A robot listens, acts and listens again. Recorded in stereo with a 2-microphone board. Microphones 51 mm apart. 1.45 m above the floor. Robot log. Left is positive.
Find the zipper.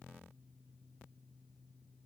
cmd idle
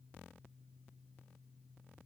cmd idle
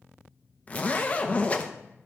note: The zipper: about 30° left or 150° left.
cmd yaw +30
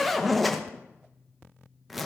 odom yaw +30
end: Facing the zipper, under 1 m away.